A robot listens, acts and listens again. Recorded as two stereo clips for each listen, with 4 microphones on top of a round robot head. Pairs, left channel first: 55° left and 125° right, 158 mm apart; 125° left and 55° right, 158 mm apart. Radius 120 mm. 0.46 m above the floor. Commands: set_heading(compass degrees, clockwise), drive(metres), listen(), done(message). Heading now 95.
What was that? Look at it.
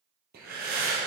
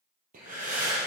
set_heading(190)
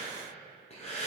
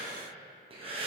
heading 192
done("Found it: breathing, straight ahead.")